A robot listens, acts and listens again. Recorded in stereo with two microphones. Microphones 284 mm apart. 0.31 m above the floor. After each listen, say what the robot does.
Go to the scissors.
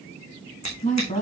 Turn 70° left.
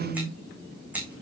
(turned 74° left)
Drive 1.0 m forward.
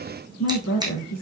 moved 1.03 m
Turn 15° right.
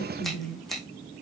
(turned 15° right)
Drive 1.0 m forward.
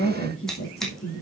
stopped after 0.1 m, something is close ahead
Keep listening.
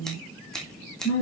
Blocked. The scissors is further on, straight ahead.